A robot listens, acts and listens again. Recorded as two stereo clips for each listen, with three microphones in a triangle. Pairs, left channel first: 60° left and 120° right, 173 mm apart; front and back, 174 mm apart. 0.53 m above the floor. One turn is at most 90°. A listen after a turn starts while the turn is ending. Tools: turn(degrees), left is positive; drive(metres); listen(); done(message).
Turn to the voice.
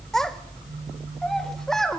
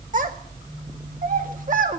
turn(degrees=90)
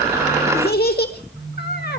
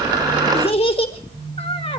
turn(degrees=55)
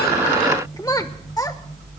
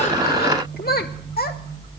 turn(degrees=-10)
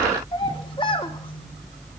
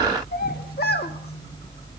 done("Found it: a child speaking, straight ahead.")